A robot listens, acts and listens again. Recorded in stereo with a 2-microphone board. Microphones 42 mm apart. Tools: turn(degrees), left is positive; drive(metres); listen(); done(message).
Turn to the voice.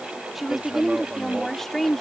turn(degrees=30)
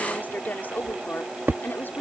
turn(degrees=125)
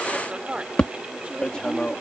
turn(degrees=-25)
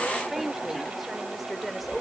done("Found it: a woman speaking, straight ahead.")